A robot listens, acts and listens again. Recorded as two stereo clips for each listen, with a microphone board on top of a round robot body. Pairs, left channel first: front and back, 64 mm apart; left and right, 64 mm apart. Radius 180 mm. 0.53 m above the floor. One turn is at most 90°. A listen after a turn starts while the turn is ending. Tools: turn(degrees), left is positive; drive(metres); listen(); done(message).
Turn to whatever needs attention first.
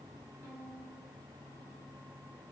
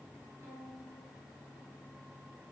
listen()
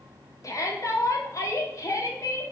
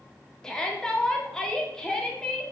turn(degrees=10)
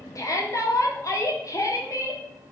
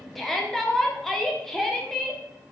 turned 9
done("Found it: a shout, straight ahead, 2 to 4 m away.")